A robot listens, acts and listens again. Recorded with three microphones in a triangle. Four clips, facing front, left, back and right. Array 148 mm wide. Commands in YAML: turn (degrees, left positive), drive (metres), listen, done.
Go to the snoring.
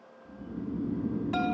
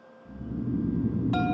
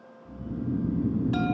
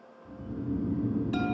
turn: -90
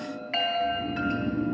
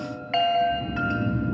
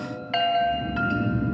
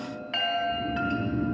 turn: -30
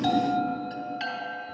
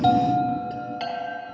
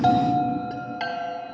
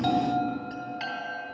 listen: true
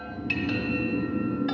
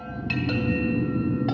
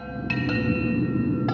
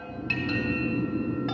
turn: -15
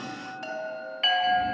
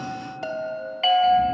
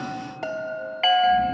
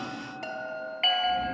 listen: true
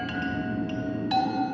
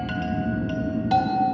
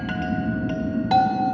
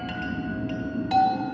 drive: 1.0
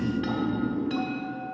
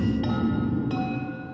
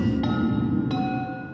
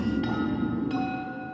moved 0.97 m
turn: -10
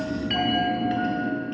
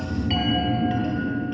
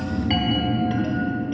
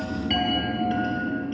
drive: 1.0
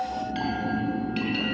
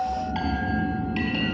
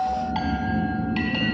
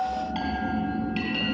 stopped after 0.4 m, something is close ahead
done: "I am next to the snoring."